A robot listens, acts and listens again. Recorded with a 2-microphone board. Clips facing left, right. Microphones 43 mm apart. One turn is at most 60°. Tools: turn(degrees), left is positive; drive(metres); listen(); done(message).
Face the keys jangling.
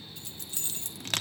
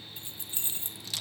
turn(degrees=-25)
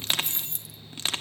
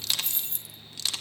done("Found it: keys jangling, straight ahead, 1 to 2 m away.")